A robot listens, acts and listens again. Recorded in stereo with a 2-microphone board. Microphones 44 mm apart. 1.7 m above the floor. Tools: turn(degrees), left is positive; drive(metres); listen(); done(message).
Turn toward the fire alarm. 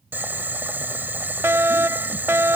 turn(degrees=-70)
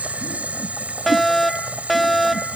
done("Found it: a fire alarm, straight ahead.")